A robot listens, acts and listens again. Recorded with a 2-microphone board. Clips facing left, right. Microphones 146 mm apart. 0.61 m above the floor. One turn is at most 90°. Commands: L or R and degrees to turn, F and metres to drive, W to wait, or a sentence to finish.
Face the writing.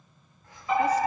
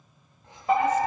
R25
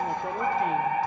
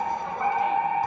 W
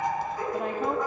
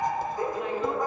W
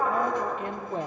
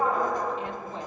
I heard writing, but can't make it out now. It was about straight ahead or 130° right.